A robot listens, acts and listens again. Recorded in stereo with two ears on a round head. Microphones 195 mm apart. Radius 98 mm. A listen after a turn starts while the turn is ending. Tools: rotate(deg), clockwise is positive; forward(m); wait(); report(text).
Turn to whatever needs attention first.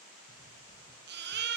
rotate(55)
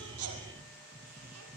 wait()
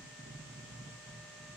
wait()
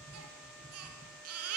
rotate(75)
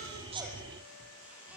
wait()
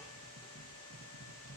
wait()
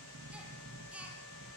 report("Found it: a baby crying, straight ahead, over 4 m away.")